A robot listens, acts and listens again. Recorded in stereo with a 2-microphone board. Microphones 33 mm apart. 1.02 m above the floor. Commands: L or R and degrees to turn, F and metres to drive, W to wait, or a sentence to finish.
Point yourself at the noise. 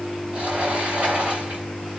R45
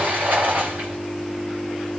R90
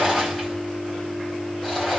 L10
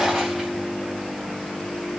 Facing the sliding door, 2 to 4 m away.